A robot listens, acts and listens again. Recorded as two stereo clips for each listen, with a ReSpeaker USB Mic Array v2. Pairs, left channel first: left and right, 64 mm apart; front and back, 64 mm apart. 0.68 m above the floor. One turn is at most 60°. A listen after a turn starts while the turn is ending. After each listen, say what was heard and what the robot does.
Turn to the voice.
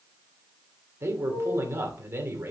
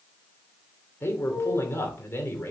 The man speaking: 45° right. Turn 45° right.
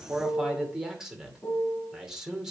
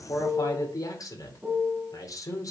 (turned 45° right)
The man speaking is now 10° right. Turn 10° right.
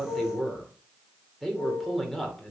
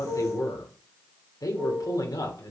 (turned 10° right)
Facing the man speaking, 2 to 4 m away.